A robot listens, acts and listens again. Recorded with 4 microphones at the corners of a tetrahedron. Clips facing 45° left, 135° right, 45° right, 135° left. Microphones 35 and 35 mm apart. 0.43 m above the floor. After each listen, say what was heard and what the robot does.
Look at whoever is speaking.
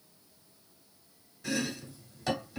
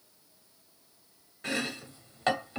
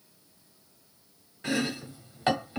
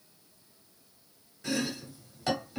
Keep listening.
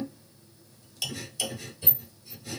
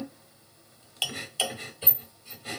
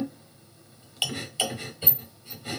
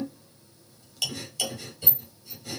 Keep listening.
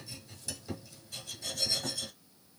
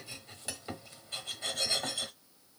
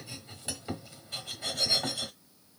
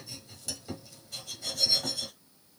I can't make out anyone speaking, only chopping.